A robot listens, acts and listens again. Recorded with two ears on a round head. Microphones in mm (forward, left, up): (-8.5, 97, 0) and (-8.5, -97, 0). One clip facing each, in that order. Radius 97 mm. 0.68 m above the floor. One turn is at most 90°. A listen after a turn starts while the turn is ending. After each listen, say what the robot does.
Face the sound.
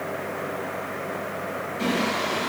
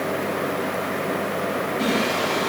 Turn 30° left.
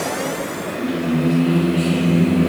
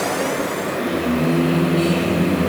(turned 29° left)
Turn 90° left.
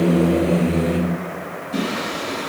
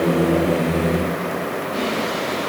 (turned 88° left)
Turn 45° left.
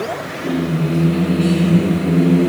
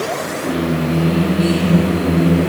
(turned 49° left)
Found it: singing, straight ahead.